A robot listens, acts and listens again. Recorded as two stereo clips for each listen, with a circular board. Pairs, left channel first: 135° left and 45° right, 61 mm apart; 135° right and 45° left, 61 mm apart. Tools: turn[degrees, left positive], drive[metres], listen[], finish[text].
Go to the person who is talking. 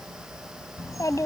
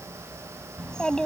Thought: The child speaking: 150° left.
Action: turn[150]
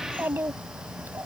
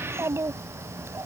Action: drive[1.0]
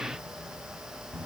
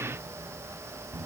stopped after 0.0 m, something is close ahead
Thought: The child speaking is now 10° left.
Action: turn[10]
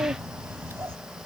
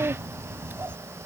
Action: finish[Blocked. The child speaking is further on, straight ahead.]